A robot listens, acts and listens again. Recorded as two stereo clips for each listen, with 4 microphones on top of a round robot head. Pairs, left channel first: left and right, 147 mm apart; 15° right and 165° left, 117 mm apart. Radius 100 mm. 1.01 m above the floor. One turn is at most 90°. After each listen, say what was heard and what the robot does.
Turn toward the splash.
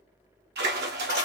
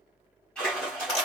The splash: 95° right. Turn 90° right.
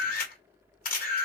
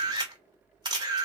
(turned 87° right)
Nothing new. It was at 10° right. Turn 10° right.
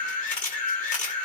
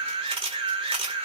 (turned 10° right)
I heard a splash from this way, but can't make it out now.